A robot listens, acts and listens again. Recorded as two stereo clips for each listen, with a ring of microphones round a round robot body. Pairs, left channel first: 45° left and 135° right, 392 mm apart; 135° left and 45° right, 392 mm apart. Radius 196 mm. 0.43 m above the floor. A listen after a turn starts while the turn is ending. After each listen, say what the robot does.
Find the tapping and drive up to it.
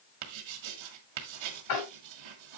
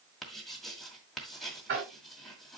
Turn 15° left.
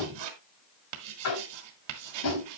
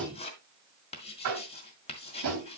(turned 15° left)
Drive 1.0 m forward.
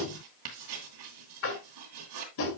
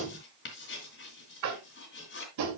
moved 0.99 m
Drive 1.0 m forward.
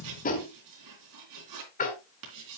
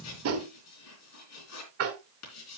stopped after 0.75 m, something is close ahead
Turn 15° right.
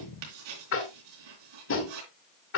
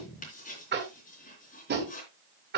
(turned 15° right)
I am next to the tapping.